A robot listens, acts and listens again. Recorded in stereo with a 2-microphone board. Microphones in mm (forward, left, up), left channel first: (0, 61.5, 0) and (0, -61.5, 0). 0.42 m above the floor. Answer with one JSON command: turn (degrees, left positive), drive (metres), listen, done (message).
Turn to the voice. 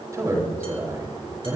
{"turn": -25}
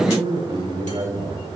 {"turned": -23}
{"turn": -135}
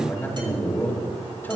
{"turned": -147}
{"turn": 15}
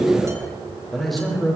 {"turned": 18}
{"done": "Found it: a man speaking, straight ahead, over 4 m away."}